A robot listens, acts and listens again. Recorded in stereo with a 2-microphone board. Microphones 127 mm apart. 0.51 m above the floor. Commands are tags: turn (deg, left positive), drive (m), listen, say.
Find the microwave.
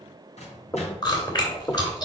<turn deg="60"/>
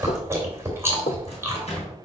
<turn deg="55"/>
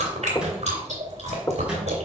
<turn deg="-10"/>
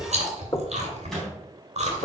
<say>Facing the microwave, 2 to 4 m away.</say>